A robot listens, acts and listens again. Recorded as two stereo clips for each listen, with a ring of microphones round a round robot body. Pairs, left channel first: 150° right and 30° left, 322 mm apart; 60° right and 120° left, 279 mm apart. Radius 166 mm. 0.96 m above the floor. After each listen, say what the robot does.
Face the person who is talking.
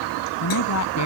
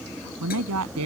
Turn 165° left.
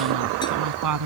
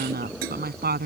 Turn 65° left.
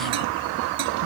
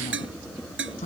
Keep listening.
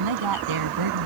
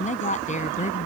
Found it: a woman speaking, straight ahead.